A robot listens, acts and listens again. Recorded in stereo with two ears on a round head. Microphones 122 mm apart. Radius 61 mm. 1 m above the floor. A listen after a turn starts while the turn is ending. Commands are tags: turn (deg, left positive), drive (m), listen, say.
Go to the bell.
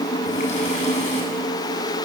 <listen/>
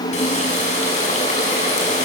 <listen/>
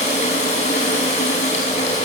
<say>I can't make out a bell to turn to.</say>